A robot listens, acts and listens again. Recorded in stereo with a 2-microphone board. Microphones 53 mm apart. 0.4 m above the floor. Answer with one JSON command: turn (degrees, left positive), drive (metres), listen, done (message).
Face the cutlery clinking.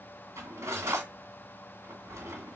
{"turn": -60}
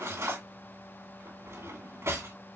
{"turn": -55}
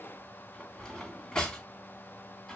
{"turn": 15}
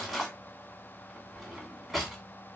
{"done": "Facing the cutlery clinking, 2 to 4 m away."}